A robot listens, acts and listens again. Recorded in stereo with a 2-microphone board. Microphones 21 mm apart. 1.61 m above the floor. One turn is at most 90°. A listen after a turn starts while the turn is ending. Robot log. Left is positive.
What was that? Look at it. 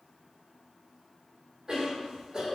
note: The cough: about 25° right or 155° right.
cmd yaw -25
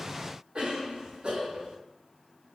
note: So it is at 130° right.
cmd yaw -90
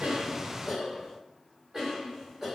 note: The cough is now 25° right.
cmd yaw -25
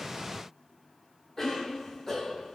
note: The cough is now 10° left.
cmd yaw +10
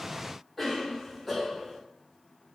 end: Facing the cough, 1 to 2 m away.